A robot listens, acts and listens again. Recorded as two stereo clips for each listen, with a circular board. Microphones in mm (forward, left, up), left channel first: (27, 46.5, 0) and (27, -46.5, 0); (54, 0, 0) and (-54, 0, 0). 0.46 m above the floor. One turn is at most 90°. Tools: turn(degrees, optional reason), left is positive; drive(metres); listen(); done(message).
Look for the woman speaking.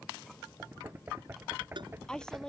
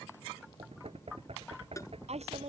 turn(degrees=90, reason="The woman speaking: 175° left.")
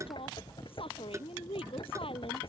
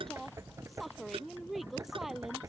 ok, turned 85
turn(degrees=90, reason="The woman speaking is now 95° left.")
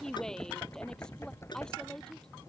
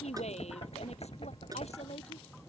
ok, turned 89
turn(degrees=10, reason="The woman speaking is now 10° left.")
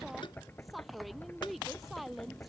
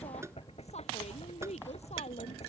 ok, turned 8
done("Found it: a woman speaking, straight ahead.")